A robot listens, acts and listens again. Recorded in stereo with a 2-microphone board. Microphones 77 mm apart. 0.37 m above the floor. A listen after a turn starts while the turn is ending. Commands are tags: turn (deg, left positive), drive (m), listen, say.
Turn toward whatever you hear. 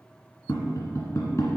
<turn deg="40"/>
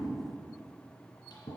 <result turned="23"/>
<turn deg="115"/>
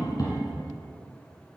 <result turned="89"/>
<turn deg="25"/>
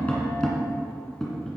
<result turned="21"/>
<say>Found it: tapping, straight ahead, 2 to 4 m away.</say>